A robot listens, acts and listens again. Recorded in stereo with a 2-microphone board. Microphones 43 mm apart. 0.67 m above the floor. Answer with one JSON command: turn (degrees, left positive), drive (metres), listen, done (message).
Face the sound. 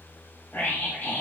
{"turn": 35}
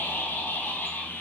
{"turn": 105}
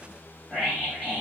{"turn": 20}
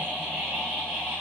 {"done": "Facing the scream, over 4 m away."}